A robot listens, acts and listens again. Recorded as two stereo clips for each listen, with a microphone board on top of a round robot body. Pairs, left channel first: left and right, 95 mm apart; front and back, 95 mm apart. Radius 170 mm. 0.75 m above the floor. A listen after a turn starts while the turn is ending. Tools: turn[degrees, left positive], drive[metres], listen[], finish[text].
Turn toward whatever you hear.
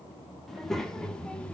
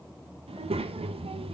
Thought: The child speaking: 165° left.
Action: turn[165]
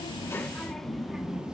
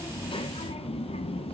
Thought: The child speaking is now 10° right.
Action: turn[-10]
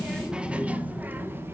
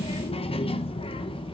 Thought: The child speaking is now 25° right.
Action: turn[-25]
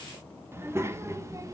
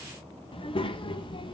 Thought: The child speaking is now 35° right.
Action: turn[-35]
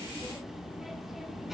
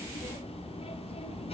Action: finish[Found it: a child speaking, straight ahead, 2 to 4 m away.]